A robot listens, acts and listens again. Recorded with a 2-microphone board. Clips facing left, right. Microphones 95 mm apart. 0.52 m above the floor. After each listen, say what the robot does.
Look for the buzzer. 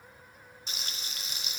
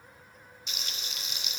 Keep listening.
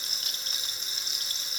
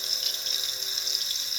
Keep listening.
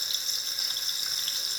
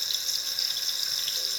I can't make out a buzzer to turn to.